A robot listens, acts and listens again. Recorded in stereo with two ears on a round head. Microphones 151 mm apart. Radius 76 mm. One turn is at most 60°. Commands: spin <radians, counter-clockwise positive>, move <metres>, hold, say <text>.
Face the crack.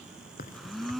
spin 0.96
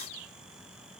hold
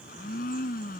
say I heard a crack, but can't make it out now. It was about straight ahead or 70° left.